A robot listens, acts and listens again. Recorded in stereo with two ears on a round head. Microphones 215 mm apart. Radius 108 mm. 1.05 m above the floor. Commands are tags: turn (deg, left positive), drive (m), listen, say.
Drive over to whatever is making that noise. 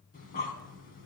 <turn deg="35"/>
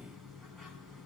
<drive m="1.0"/>
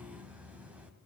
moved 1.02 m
<drive m="1.0"/>
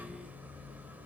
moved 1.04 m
<drive m="1.0"/>
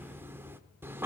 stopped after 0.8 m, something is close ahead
<turn deg="-10"/>
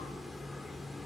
<say>Arrived at the breathing, straight ahead.</say>